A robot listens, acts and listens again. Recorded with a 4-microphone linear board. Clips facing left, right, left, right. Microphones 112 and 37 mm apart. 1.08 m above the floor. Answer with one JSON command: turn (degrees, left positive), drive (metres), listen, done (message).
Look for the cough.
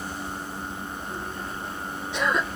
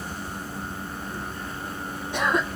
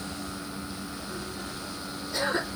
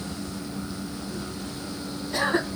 {"turn": -45}
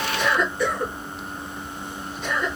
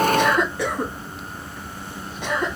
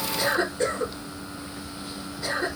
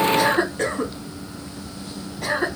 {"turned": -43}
{"turn": -90}
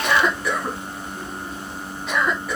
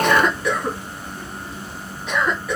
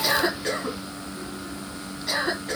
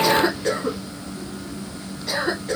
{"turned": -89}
{"done": "Found it: a cough, straight ahead, 2 to 4 m away."}